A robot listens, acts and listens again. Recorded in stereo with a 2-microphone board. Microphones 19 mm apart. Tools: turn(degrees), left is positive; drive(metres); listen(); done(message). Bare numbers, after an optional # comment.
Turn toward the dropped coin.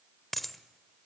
turn(30)
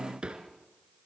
listen()
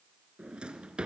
done("I heard a dropped coin, but can't make it out now. It was about 25° right or 145° left.")